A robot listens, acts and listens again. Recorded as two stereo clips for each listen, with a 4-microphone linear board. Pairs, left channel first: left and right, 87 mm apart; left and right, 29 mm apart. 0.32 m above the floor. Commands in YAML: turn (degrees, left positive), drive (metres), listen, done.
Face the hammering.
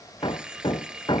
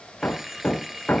turn: 60
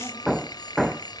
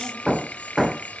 done: "Facing the hammering."